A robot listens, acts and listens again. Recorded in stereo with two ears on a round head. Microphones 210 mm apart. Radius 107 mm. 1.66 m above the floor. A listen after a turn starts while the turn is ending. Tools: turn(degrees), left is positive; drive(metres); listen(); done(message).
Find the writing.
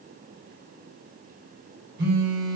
listen()
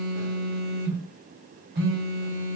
listen()
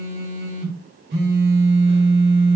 done("I can't make out writing to turn to.")